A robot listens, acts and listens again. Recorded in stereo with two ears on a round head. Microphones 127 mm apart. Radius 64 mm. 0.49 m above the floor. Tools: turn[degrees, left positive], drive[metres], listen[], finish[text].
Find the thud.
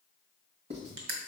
Action: listen[]
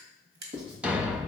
Action: turn[-30]
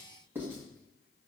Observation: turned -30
Action: listen[]
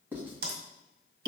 Action: finish[I heard a thud, but can't make it out now. It was about 20° left or 140° right.]